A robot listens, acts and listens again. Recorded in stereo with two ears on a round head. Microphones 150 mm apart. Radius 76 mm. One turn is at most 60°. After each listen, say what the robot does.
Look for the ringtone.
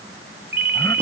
Turn 60° right.
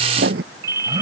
Turn 20° right.
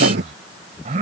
Keep listening.
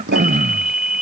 Facing the ringtone.